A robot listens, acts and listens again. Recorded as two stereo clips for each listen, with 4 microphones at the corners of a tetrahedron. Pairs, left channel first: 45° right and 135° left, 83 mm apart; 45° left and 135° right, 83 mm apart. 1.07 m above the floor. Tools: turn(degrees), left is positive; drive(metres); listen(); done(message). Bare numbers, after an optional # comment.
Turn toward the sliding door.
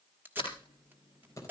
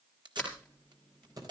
# The sliding door: 35° right.
turn(-35)
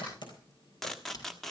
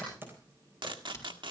# The sliding door is now 10° right.
turn(-10)
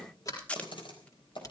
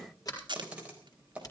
done("Found it: a sliding door, straight ahead, over 4 m away.")